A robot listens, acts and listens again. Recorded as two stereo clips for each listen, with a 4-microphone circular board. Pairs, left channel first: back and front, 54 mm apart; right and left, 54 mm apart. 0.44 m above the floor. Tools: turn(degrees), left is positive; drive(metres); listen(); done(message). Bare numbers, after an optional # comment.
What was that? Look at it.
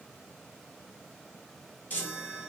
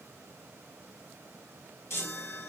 # The chime: 125° right.
turn(-125)
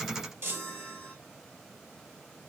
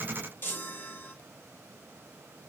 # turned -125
# The chime is now 45° right.
turn(-45)
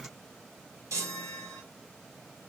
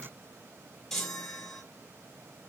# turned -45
# The chime is now 10° right.
turn(-10)
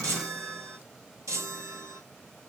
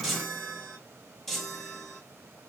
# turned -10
done("Facing the chime.")